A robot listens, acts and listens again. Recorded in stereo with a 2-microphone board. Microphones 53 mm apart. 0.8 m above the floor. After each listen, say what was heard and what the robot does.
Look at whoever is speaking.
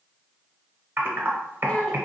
The child speaking: about 20° left or 160° left. Turn 20° left.
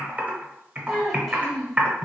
Found it: a child speaking, straight ahead.